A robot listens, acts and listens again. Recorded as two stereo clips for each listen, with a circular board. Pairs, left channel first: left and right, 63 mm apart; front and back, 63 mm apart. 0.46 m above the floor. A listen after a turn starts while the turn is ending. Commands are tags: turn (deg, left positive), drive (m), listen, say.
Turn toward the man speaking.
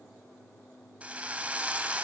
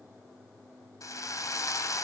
<listen/>
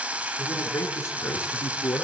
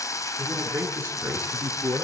<turn deg="125"/>
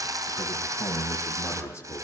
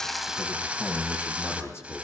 <turn deg="45"/>
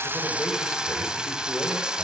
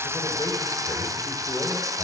<listen/>
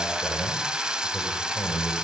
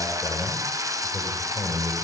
<say>Found it: a man speaking, straight ahead.</say>